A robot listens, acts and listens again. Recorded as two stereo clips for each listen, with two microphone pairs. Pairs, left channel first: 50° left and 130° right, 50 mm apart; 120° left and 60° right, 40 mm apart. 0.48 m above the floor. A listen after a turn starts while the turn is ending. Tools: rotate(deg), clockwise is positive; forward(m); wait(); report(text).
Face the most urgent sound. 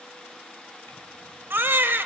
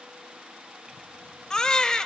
rotate(170)
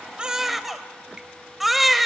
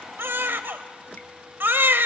rotate(45)
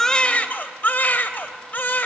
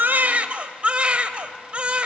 report("Facing the baby crying, under 1 m away.")